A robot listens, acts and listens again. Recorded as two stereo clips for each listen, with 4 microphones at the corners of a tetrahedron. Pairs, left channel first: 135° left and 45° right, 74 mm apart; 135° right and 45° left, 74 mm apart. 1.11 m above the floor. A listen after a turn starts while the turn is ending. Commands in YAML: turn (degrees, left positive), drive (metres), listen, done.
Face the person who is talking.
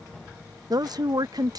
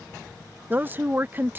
turn: -20
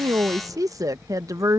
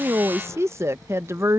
done: "Found it: a woman speaking, straight ahead."